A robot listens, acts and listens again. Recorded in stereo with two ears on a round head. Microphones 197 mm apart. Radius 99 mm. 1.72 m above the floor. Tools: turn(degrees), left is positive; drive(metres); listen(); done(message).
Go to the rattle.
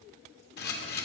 listen()
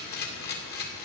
listen()
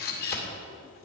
done("I can't make out a rattle, only a camera shutter.")